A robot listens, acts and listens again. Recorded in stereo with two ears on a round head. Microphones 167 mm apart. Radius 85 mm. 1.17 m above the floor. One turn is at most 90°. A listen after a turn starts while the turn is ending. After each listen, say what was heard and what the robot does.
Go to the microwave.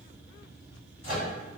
The microwave: about 50° left or 130° left. Turn 50° left.
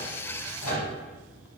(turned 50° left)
So it is at 80° left. Turn 80° left.
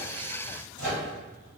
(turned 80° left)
The microwave is now 25° left. Turn 25° left.
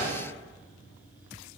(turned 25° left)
Keep listening.
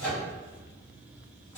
The microwave is now 15° left. Turn 15° left.
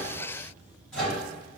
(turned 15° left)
Drive 1.0 m forward.
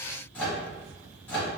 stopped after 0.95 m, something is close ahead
The microwave is now 10° left. Turn 10° left.
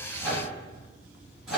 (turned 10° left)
Arrived at the microwave, straight ahead.